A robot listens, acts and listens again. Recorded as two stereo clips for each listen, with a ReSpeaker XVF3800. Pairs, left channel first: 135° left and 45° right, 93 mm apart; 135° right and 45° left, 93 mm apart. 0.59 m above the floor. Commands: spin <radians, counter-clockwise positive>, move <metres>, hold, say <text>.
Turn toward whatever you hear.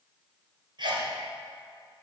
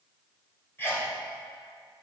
spin -1.22
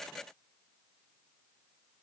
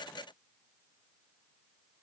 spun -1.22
say Facing where the sneeze came from. I can't hear it now.